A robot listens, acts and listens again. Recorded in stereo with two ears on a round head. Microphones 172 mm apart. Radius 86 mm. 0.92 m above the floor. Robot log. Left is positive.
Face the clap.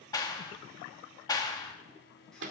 note: The clap: about 20° left or 160° left.
cmd yaw +20
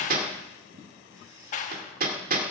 note: So it is at 135° left.
cmd yaw +135
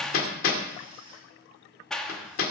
end: Found it: a clap, straight ahead, 1 to 2 m away.